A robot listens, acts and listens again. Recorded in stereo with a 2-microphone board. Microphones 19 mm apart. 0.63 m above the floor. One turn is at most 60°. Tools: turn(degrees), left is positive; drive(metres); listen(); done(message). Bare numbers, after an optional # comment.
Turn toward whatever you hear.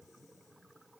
listen()
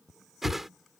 turn(-30)
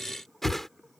# So it is at 20° left.
turn(20)
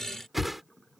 done("Facing the whoosh.")